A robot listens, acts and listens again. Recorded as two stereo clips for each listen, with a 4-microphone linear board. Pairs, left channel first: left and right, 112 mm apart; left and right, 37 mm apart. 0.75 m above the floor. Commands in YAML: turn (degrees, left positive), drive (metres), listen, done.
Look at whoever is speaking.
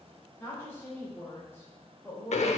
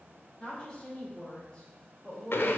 turn: 20
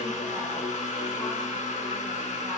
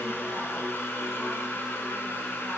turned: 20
listen: true
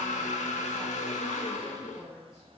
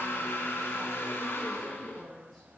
done: "Facing the woman speaking."